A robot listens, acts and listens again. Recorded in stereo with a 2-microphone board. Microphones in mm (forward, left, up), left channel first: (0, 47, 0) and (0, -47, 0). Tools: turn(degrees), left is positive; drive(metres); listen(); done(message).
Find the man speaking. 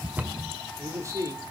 turn(degrees=-35)
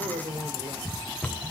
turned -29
turn(degrees=-110)
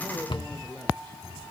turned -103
turn(degrees=15)
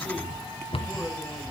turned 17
listen()
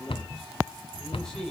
done("Facing the man speaking, over 4 m away.")